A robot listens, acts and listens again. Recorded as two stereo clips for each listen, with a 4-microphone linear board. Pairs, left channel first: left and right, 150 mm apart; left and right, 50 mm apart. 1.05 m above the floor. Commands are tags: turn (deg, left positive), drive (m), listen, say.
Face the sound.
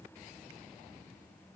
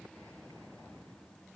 <listen/>
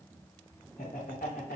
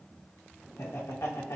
<turn deg="90"/>
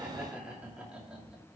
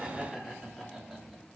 <say>Facing the laughter, 2 to 4 m away.</say>